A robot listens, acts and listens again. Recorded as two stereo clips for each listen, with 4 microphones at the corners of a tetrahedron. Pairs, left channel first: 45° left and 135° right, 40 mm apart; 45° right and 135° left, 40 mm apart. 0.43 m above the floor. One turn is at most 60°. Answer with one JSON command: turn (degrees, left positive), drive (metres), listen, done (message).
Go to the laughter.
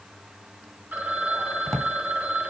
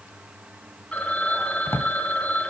{"listen": true}
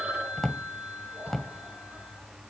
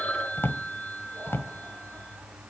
{"listen": true}
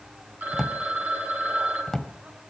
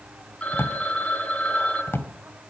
{"done": "I can't make out laughter, only a drawer and a phone ringing."}